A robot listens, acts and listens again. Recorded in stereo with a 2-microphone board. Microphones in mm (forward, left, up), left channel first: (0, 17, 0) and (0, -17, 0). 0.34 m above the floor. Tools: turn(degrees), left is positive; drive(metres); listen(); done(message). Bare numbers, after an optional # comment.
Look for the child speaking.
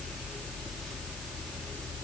listen()
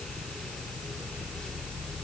listen()
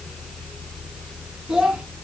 # The child speaking: about 20° right or 160° right.
turn(-20)
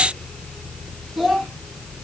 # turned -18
done("Facing the child speaking.")